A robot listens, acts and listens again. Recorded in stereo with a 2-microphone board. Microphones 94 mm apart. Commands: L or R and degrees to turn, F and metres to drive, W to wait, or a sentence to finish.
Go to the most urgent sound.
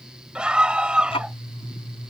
R30
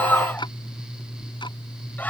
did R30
L20
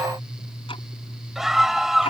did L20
F1.0
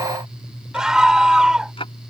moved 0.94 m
R10
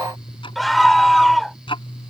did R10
F1.0
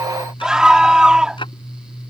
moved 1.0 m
R10
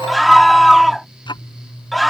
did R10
F1.0
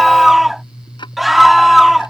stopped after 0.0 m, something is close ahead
Arrived at the scream, straight ahead.